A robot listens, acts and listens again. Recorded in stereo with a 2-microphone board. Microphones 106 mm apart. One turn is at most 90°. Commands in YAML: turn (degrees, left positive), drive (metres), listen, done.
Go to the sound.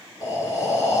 turn: 30
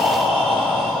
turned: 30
drive: 1.0
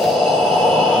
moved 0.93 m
drive: 1.0
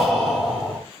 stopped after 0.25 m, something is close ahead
done: "Blocked. The breathing is further on, straight ahead."